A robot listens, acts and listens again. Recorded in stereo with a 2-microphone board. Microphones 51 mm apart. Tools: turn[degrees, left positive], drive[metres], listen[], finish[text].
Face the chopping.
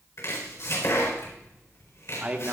Thought: The chopping: about 60° left or 120° left.
Action: turn[60]
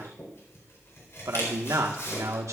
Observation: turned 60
Thought: So it is at 60° left.
Action: turn[60]
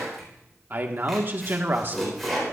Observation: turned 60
Action: finish[Found it: chopping, straight ahead.]